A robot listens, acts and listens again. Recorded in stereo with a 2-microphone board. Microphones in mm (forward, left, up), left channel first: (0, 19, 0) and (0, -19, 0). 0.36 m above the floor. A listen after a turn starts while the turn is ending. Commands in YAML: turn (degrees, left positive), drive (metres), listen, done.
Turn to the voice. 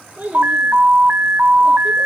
turn: -45
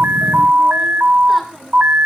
listen: true
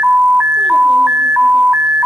listen: true
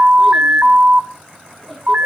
done: "I heard a child speaking, but can't make it out now. It was about straight ahead or 90° right."